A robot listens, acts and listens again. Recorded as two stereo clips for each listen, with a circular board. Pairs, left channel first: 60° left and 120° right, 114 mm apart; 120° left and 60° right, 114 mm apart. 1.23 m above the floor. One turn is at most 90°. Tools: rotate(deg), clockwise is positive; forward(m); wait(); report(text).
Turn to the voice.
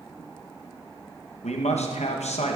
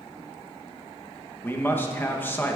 rotate(-50)
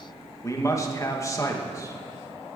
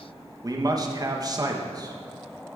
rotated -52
report("Facing the man speaking, 1 to 2 m away.")